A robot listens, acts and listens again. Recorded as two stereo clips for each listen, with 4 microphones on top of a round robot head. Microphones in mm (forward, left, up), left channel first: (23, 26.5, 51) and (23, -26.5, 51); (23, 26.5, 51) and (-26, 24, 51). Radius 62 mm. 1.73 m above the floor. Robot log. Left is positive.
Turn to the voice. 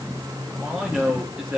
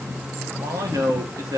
note: The man speaking: 160° right.
cmd yaw -160
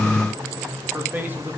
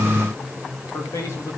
note: The man speaking is now 35° right.
cmd yaw -35
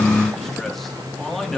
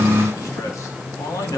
end: Facing the man speaking, over 4 m away.